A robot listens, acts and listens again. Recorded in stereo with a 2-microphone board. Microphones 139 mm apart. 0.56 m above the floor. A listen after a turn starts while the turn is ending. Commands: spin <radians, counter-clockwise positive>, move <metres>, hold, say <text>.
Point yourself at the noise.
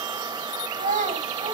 spin -1.57
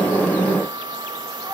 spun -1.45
hold
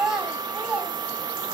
say Facing the child speaking, 2 to 4 m away.